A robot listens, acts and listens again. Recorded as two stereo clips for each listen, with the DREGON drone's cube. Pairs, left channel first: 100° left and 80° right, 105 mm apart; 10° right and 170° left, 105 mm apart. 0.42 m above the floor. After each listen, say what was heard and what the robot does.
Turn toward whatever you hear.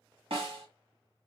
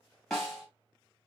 The snare drum: 100° right. Turn 100° right.
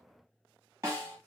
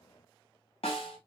The snare drum is now 20° right. Turn 20° right.
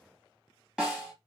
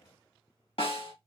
Facing the snare drum.